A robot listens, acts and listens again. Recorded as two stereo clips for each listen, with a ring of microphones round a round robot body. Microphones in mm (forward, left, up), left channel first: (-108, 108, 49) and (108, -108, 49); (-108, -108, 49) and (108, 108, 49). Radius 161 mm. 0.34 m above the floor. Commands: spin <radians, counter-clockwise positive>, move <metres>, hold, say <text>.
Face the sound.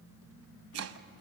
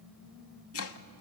spin -1.57
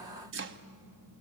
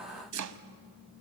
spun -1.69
spin 0.17
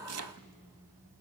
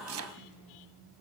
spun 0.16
say Facing the chopping.